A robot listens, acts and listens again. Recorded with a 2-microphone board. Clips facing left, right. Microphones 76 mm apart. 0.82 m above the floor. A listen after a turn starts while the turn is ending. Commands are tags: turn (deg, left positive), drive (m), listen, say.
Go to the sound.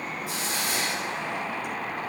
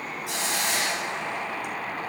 <turn deg="-70"/>
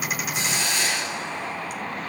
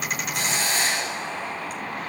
<turn deg="-40"/>
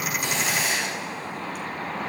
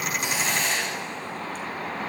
<drive m="1.0"/>
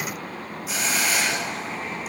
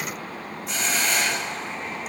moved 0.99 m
<drive m="1.0"/>
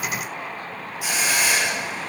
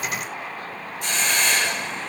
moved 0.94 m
<turn deg="10"/>
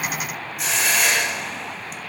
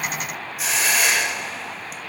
<drive m="1.0"/>
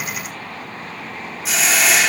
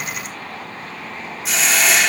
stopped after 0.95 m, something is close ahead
<say>I am next to the hiss.</say>